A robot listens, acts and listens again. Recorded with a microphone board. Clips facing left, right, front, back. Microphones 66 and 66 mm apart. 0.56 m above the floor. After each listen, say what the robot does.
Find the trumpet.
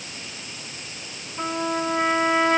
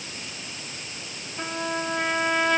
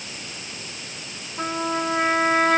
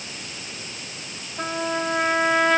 Turn 30° left.
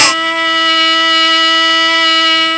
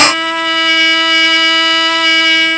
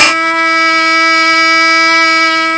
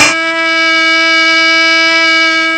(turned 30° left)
Facing the trumpet.